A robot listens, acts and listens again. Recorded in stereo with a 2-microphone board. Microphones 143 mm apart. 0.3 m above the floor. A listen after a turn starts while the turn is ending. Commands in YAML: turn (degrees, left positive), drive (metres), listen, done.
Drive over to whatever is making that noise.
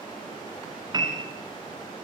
turn: -30
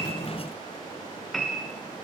drive: 1.0
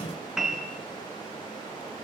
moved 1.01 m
drive: 1.0
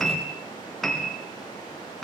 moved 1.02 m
drive: 1.0
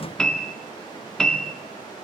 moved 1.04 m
drive: 1.0
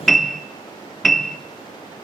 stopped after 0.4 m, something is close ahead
done: "I am next to the piano."